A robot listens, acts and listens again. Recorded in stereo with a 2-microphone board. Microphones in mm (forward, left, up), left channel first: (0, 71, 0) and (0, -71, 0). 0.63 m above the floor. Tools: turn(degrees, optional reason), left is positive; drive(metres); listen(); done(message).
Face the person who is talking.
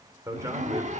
turn(degrees=-20, reason="The man speaking: about 20° right or 160° right.")
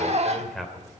done("Facing the man speaking.")